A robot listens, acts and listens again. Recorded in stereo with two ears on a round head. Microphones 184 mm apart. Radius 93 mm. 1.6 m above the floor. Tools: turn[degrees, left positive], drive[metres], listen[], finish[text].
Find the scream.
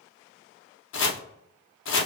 Action: listen[]
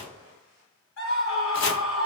Action: turn[90]
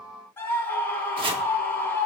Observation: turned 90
Thought: So it is at 10° left.
Action: turn[10]
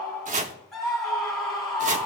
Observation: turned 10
Action: finish[Found it: a scream, straight ahead, 2 to 4 m away.]